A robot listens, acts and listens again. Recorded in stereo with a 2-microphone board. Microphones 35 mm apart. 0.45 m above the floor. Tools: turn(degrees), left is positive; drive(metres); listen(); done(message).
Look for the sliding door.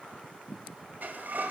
turn(degrees=-50)
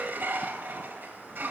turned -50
turn(degrees=-75)
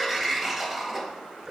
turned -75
done("Found it: a sliding door, straight ahead.")